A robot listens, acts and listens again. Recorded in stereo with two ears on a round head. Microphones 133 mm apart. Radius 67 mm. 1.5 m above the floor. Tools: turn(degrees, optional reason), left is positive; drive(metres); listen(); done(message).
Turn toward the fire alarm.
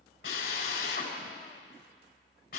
listen()
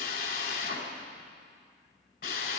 listen()
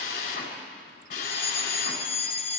turn(degrees=45, reason="The fire alarm: about 45° left or 135° left.")
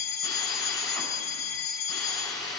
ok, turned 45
turn(degrees=85, reason="So it is at 85° left.")
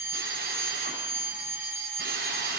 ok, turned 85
turn(degrees=-15, reason="The fire alarm is now 15° right.")
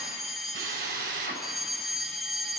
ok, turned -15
done("Found it: a fire alarm, straight ahead.")